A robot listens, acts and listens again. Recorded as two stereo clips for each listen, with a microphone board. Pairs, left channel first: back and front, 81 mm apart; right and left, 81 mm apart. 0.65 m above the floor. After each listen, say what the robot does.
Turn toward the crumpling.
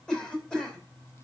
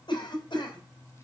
Keep listening.
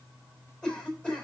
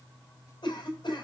Keep listening.
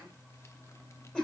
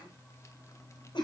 I can't make out crumpling, only a cough.